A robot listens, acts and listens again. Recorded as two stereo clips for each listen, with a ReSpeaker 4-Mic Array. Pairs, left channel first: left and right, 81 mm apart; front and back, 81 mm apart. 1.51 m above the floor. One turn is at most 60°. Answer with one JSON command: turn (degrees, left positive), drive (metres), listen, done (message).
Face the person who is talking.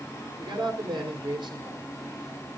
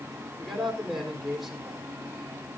{"turn": -60}
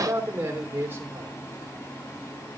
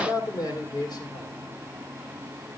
{"turn": -30}
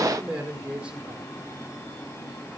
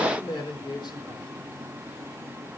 {"turn": -10}
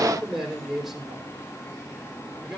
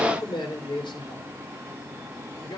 {"done": "Found it: a man speaking, straight ahead."}